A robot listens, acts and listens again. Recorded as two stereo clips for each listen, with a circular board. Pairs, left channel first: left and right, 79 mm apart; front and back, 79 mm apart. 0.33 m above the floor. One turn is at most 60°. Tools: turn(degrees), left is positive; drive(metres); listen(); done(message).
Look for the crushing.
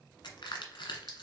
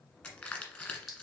turn(degrees=60)
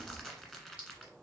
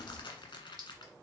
done("Facing the crushing, 1 to 2 m away.")